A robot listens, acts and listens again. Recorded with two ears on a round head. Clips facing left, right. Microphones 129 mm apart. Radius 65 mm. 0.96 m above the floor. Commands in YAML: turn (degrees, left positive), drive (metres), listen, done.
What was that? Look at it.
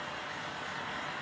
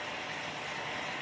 listen: true
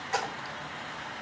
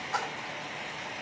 turn: 70
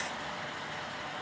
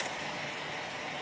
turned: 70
listen: true
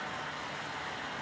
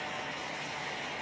done: "I heard a splash, but can't make it out now. It was about straight ahead or 40° left."